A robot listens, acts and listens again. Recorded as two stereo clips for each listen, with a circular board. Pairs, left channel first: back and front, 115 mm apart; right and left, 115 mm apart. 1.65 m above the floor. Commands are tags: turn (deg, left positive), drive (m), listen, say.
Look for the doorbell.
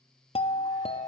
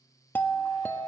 <turn deg="-160"/>
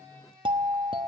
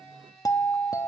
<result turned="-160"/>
<turn deg="-35"/>
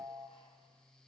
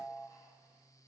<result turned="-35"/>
<say>Facing the doorbell.</say>